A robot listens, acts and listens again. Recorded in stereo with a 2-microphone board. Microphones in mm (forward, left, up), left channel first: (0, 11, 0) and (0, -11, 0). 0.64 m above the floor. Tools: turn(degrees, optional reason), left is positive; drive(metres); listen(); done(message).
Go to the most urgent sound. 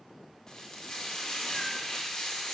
listen()
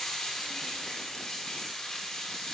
listen()
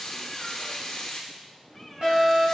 turn(degrees=-50, reason="The fire alarm: about 50° right or 130° right.")
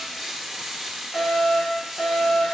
turn(degrees=-10, reason="So it is at 10° right.")
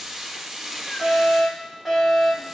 drive(metres=1.0)
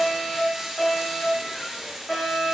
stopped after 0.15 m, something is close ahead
done("Something is in my way. I am facing the fire alarm but have not reached it.")